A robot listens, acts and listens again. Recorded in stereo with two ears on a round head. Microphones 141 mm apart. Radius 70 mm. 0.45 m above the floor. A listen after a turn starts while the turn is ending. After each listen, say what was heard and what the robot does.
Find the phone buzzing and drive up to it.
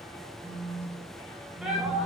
The phone buzzing: about 40° right or 140° right. Turn 40° right.
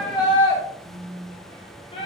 So it is at 95° right. Turn 95° right.
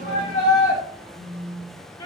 The phone buzzing is now 20° left. Turn 20° left.
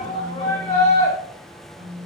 Drive 1.0 m forward.
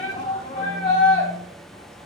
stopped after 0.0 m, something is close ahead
Keep listening.
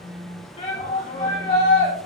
Blocked. The phone buzzing is further on, straight ahead.